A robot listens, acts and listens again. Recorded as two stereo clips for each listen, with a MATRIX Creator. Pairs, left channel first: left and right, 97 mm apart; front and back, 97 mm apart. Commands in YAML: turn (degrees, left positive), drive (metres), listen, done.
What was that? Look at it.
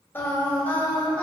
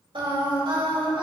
turn: 165
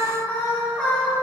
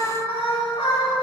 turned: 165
turn: 20
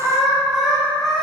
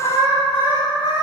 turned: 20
done: "Facing the singing, 2 to 4 m away."